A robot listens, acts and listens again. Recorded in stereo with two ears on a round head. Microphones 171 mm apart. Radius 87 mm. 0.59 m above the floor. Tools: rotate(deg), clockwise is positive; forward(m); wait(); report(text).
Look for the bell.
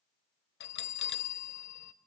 rotate(-65)
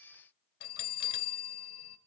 rotate(-50)
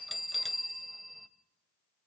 report("Facing the bell.")